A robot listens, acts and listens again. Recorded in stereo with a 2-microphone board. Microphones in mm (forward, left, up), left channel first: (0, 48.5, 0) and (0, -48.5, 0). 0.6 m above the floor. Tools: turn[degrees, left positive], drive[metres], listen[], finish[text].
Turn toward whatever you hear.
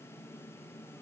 Action: listen[]
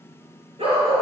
Thought: The dog barking: about 70° right or 110° right.
Action: turn[-70]
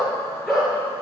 Action: finish[Found it: a dog barking, straight ahead.]